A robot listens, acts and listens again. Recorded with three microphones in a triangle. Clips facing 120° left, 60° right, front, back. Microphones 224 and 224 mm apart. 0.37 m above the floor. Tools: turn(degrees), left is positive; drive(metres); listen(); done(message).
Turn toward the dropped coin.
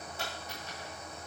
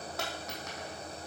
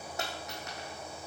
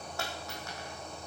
turn(degrees=-70)
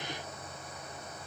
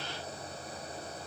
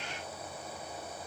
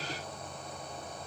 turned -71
done("I heard a dropped coin from this way, but can't make it out now.")